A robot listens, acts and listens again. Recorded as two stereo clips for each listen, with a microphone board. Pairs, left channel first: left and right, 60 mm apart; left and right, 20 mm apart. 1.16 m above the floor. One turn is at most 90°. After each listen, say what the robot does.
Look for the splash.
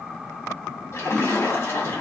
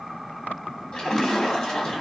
Turn 45° left.
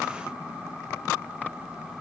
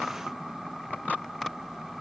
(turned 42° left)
Keep listening.
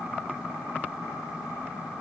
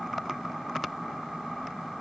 I heard a splash, but can't make it out now. It was about straight ahead or 95° left.